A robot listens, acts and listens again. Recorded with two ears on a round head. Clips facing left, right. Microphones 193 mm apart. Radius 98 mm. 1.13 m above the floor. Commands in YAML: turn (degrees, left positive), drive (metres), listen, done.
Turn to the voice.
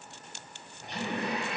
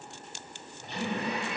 turn: 30
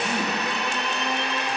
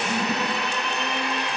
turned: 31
turn: 135
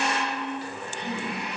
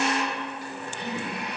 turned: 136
done: "Facing the man speaking, 2 to 4 m away."